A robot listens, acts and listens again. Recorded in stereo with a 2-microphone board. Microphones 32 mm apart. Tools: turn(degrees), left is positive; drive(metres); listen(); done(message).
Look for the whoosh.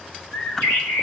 turn(degrees=30)
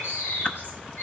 listen()
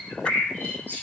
listen()
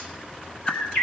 turn(degrees=145)
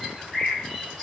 listen()
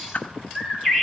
turn(degrees=40)
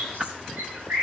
turn(degrees=-25)
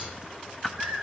done("Facing the whoosh, under 1 m away.")